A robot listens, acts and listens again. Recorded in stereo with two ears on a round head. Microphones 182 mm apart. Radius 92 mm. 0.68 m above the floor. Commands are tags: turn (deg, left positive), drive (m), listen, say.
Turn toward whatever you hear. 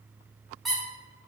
<turn deg="30"/>
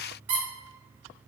<turn deg="-30"/>
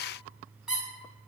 <say>Facing the squeak.</say>